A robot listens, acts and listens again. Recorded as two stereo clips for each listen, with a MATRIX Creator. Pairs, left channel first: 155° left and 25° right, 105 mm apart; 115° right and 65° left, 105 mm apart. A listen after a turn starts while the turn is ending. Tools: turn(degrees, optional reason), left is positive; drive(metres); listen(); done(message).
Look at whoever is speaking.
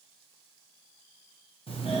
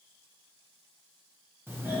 listen()
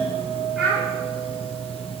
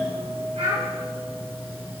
turn(degrees=65, reason="The child speaking: 65° left.")
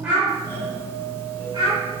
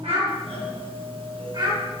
turn(degrees=20, reason="The child speaking is now 20° left.")
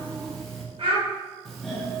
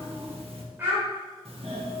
done("Found it: a child speaking, straight ahead.")